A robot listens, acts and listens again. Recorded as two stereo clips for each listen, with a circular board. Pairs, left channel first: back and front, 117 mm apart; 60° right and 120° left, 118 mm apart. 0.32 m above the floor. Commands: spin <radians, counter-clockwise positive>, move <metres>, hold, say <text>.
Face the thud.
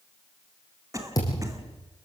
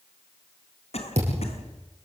spin 2.18
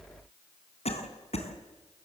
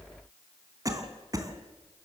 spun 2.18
say Facing where the thud came from. I can't hear it now.